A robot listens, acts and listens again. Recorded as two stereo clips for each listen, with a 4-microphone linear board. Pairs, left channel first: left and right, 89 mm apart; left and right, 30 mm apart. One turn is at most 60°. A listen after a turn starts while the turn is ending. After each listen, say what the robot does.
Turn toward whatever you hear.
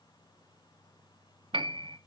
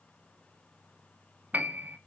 Turn 60° right.
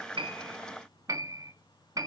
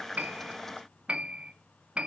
Turn 45° right.
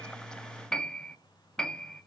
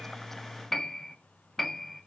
Turn 10° left.
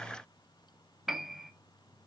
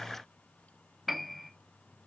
Found it: a piano, straight ahead, 1 to 2 m away.